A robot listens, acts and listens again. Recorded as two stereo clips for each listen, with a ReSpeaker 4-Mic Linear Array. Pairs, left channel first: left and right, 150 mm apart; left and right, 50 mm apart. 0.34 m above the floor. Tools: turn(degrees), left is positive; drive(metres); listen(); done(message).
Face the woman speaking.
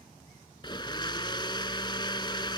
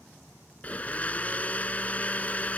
listen()
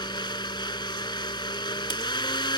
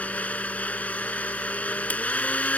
listen()
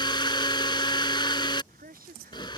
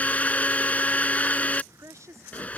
turn(degrees=-75)
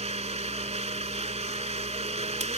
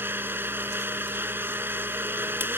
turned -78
listen()
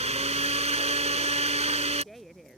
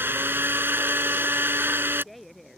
done("Facing the woman speaking.")